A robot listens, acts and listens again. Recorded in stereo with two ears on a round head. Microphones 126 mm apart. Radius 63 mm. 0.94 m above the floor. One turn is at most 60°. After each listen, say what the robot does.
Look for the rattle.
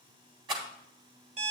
Turn 35° right.
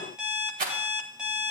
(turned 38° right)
Turn 60° right.
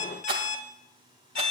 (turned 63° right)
Turn 45° right.
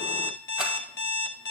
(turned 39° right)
Keep listening.
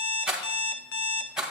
Found it: a rattle, straight ahead.